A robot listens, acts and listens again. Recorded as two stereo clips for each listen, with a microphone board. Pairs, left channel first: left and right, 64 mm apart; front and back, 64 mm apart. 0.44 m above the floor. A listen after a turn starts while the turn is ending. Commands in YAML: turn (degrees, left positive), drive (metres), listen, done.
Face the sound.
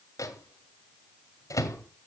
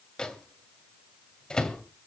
turn: 75
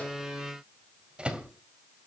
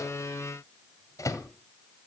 turn: -20
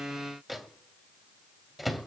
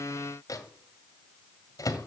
done: "Found it: a microwave, straight ahead, 2 to 4 m away."